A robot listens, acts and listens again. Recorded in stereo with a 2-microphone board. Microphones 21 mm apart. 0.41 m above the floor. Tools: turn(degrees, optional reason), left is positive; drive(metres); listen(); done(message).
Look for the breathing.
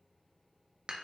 listen()
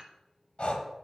turn(degrees=70, reason="The breathing: about 70° left or 110° left.")
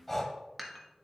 turn(degrees=10, reason="So it is at 10° left.")
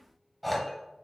done("Facing the breathing.")